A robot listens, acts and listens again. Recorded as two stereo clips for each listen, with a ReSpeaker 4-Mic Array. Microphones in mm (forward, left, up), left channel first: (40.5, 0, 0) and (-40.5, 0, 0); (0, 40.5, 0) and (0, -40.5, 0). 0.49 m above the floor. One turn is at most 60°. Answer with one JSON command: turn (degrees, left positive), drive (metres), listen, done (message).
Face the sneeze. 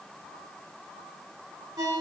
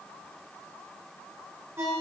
{"listen": true}
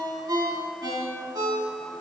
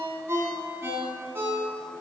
{"listen": true}
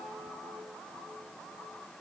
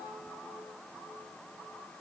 {"done": "I can't make out a sneeze to turn to."}